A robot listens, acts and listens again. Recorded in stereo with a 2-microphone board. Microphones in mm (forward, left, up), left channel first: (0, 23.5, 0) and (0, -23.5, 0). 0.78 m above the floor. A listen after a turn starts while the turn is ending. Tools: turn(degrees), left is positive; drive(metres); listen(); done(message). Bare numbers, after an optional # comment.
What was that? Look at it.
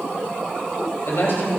# The man speaking: about 70° left or 110° left.
turn(70)
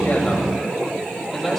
# So it is at 10° left.
turn(10)
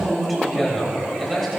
done("Facing the man speaking, 2 to 4 m away.")